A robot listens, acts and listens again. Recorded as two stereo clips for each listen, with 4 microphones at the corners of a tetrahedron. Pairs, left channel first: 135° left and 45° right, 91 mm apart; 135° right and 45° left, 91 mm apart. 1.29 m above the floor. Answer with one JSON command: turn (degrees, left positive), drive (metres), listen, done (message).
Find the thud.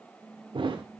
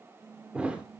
{"turn": -30}
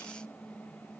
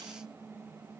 {"done": "Facing where the thud came from. I can't hear it now."}